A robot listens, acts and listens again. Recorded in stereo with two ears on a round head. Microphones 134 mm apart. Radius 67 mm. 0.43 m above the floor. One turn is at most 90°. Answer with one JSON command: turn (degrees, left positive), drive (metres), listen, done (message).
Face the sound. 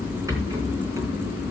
{"turn": -20}
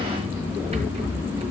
{"turn": -90}
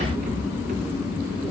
{"turn": -50}
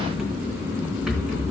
{"done": "Found it: a rattle, straight ahead, 2 to 4 m away."}